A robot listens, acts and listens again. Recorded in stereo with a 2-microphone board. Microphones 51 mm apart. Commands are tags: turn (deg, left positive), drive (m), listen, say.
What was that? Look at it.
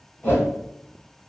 <turn deg="35"/>
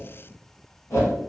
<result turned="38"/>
<turn deg="105"/>
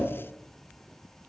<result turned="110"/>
<listen/>
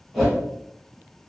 <say>Found it: a whoosh, straight ahead.</say>